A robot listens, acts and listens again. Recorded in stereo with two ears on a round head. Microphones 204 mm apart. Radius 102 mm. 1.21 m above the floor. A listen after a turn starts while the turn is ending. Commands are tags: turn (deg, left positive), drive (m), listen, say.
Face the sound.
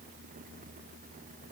<listen/>
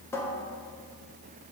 <turn deg="30"/>
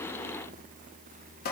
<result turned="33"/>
<turn deg="135"/>
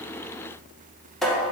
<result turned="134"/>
<say>Found it: a cupboard door, straight ahead.</say>